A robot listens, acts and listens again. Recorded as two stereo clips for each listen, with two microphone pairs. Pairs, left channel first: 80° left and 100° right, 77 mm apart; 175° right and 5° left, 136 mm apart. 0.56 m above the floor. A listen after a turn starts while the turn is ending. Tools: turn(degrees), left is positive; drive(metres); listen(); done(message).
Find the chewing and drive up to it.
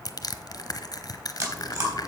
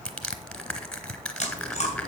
turn(degrees=-140)
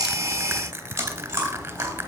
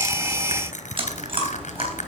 turn(degrees=-40)
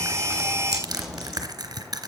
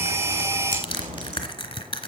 turn(degrees=-10)
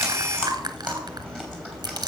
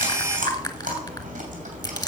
drive(metres=1.0)
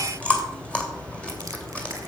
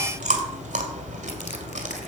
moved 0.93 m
drive(metres=1.0)
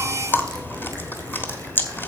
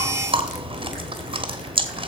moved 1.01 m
turn(degrees=30)
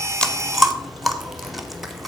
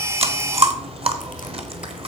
drive(metres=1.0)
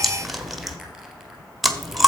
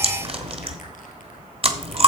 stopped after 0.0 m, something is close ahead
done("I am next to the chewing.")